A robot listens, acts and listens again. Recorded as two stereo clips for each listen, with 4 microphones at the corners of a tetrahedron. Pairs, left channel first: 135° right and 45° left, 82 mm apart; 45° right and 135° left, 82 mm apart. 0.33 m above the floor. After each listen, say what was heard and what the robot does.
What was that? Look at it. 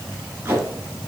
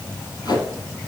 The tape being pulled: 20° right. Turn 20° right.
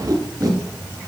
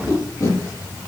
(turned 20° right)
Facing the tape being pulled, 2 to 4 m away.